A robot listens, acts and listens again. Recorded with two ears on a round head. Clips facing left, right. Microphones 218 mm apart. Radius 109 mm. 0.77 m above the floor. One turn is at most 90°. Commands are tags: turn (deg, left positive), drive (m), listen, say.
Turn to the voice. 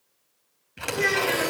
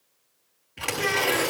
<turn deg="70"/>
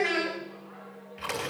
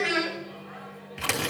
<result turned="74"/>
<say>Found it: a child speaking, straight ahead, over 4 m away.</say>